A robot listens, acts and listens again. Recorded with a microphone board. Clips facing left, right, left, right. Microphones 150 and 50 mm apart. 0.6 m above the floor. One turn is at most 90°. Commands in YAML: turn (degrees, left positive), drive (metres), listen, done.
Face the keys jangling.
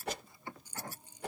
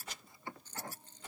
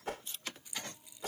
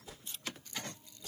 turn: 30
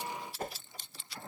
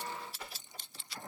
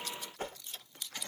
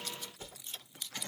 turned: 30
turn: -15
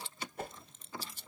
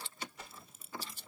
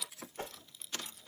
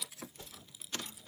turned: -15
turn: -10
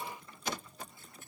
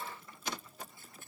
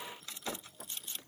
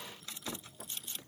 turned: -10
listen: true
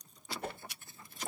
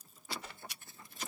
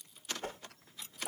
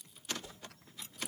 done: "Found it: keys jangling, straight ahead."